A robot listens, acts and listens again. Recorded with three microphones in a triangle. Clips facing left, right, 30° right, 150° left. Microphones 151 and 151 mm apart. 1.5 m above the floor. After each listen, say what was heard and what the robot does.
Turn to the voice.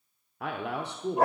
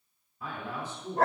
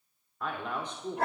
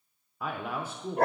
The man speaking: 65° left. Turn 65° left.
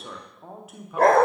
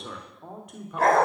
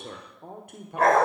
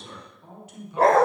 Found it: a man speaking, straight ahead, under 1 m away.